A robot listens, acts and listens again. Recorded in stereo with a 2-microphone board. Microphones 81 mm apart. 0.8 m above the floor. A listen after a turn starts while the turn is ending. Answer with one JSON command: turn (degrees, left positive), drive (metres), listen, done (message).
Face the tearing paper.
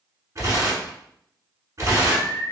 {"turn": -40}
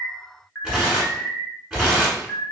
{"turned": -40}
{"done": "Facing the tearing paper, 1 to 2 m away."}